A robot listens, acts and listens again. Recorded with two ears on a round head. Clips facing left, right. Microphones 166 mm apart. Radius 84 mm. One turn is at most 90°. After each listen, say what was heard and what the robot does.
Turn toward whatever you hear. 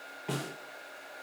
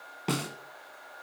Turn 90° right.
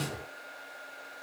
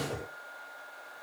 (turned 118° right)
So it is at 30° left. Turn 30° left.
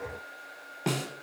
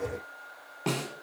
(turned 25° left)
Facing the snare drum, 1 to 2 m away.